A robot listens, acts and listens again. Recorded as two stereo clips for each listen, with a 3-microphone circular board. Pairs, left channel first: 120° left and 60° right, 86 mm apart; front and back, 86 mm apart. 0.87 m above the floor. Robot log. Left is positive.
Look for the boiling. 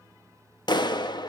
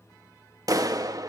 cmd idle
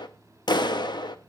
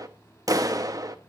cmd idle
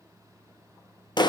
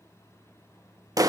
end: I can't make out boiling, only a clap.